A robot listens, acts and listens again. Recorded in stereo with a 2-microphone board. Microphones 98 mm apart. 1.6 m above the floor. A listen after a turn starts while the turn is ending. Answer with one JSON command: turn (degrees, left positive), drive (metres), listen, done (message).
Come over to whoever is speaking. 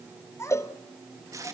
{"turn": 30}
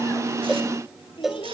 {"turn": 120}
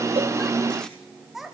{"drive": 1.0}
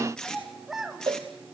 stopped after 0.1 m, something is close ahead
{"done": "Something is in my way. I am facing the child speaking but have not reached it."}